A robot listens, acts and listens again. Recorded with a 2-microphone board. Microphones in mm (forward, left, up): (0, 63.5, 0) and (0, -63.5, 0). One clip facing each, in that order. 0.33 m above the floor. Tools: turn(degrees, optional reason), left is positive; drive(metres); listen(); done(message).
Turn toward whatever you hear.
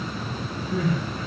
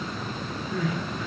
turn(degrees=30, reason="The crying: about 30° left or 150° left.")
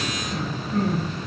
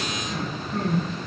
done("Found it: crying, straight ahead, 1 to 2 m away.")